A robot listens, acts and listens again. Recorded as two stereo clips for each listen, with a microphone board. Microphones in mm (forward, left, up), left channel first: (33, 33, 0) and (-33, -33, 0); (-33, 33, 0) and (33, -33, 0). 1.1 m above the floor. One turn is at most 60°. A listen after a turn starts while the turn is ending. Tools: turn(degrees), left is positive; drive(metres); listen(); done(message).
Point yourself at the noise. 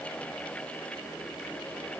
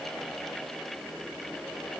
listen()
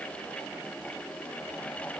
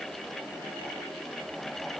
listen()
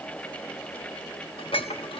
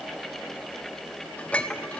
turn(degrees=60)
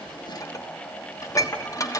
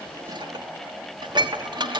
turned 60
turn(degrees=-10)
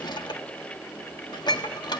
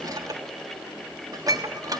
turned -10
done("Found it: dishes clattering, straight ahead, 1 to 2 m away.")